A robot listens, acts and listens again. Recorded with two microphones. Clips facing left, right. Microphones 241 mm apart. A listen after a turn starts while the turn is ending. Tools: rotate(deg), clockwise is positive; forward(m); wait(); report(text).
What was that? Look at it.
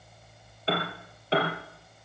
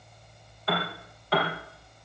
rotate(-30)
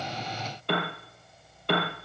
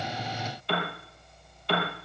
rotate(-120)
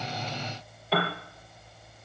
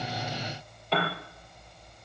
report("Facing the piano, over 4 m away.")